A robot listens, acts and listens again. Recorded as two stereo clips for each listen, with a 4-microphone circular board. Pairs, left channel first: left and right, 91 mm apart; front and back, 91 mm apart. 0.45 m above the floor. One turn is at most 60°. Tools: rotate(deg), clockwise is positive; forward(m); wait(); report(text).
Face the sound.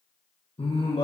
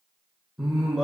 rotate(-60)
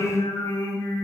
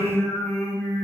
rotate(-55)
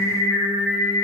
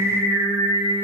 rotate(-10)
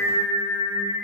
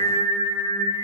report("Found it: singing, straight ahead, 2 to 4 m away.")